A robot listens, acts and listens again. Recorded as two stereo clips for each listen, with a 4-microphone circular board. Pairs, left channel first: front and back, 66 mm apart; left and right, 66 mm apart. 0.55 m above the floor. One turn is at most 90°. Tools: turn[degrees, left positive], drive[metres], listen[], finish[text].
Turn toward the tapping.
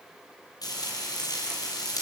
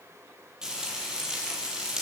Action: listen[]
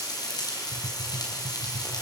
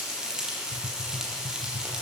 Thought: The tapping: 105° right.
Action: turn[-90]
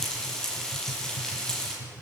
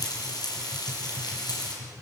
Thought: The tapping is now 15° right.
Action: turn[-15]
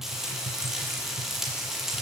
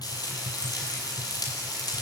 Action: finish[Facing the tapping.]